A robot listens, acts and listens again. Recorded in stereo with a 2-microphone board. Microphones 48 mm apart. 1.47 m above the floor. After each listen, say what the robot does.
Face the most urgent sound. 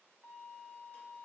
Keep listening.
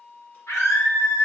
Turn 90° left.
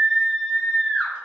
Facing the scream.